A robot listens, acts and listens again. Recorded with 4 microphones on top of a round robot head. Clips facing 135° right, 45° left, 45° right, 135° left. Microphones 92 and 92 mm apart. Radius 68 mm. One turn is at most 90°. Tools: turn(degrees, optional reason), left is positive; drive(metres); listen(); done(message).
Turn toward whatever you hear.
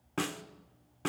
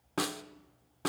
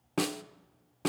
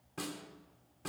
turn(degrees=-30, reason="The snare drum: 30° right.")
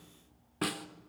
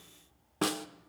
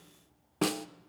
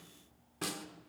turn(degrees=-15, reason="The snare drum is now 15° right.")
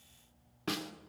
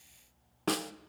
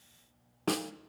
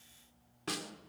done("Found it: a snare drum, straight ahead.")